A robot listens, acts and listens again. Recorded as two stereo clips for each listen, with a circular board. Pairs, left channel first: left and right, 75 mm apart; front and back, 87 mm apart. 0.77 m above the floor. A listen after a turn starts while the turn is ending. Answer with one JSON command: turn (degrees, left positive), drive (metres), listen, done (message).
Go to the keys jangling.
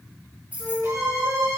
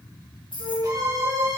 {"turn": -20}
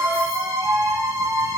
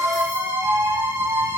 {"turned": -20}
{"listen": true}
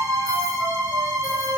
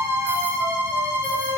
{"listen": true}
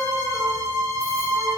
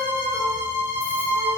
{"done": "Facing where the keys jangling came from. I can't hear it now. I did not reach it."}